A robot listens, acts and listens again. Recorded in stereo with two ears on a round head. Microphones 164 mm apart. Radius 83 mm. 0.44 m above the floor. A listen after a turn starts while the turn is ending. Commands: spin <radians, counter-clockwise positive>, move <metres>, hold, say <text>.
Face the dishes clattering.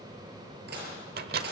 spin -1.05
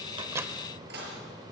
spin -0.96
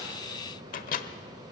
hold
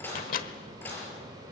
spin 0.17
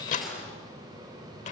say Facing the dishes clattering, over 4 m away.